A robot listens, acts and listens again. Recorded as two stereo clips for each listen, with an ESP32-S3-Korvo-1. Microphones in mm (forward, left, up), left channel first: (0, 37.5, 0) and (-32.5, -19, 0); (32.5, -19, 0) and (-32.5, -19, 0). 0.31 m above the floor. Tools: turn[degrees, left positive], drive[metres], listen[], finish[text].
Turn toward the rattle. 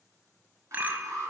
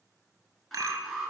Thought: The rattle: 175° right.
Action: turn[-175]
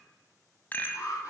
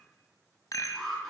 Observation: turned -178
Action: finish[Found it: a rattle, straight ahead, under 1 m away.]